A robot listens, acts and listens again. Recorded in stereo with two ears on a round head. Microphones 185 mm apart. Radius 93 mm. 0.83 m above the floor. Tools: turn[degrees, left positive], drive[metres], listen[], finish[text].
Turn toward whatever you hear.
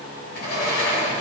Thought: The sliding door: about 50° left or 130° left.
Action: turn[50]
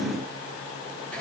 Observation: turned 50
Thought: So it is at 10° left.
Action: turn[10]
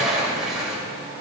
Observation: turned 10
Action: finish[Facing the sliding door, 2 to 4 m away.]